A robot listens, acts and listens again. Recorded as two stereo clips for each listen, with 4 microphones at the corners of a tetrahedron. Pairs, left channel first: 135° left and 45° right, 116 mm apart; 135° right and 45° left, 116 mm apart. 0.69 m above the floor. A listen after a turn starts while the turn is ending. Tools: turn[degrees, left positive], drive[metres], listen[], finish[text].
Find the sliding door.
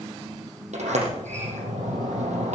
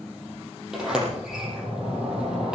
Thought: The sliding door: 40° right.
Action: turn[-40]
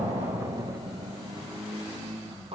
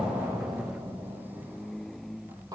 Thought: The sliding door is now 10° right.
Action: turn[-10]
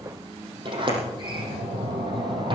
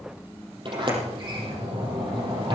Action: finish[Facing the sliding door.]